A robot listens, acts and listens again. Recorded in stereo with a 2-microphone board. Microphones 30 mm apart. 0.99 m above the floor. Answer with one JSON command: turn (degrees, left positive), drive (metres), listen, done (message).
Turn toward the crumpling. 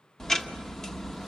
{"listen": true}
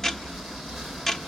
{"listen": true}
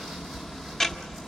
{"done": "I can't make out crumpling, only ticking."}